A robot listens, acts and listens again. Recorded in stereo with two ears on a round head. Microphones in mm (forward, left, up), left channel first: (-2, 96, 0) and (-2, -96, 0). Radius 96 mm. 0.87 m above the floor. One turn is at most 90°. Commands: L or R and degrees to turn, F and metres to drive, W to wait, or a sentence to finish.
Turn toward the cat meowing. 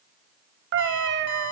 R55
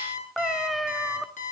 Facing the cat meowing.